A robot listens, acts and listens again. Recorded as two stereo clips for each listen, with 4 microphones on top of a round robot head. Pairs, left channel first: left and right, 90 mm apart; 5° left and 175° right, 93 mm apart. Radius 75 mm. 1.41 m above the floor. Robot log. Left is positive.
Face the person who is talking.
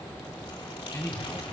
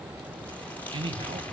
note: The man speaking: 150° left.
cmd yaw +150
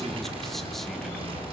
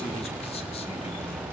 cmd idle
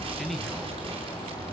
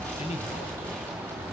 end: Found it: a man speaking, straight ahead.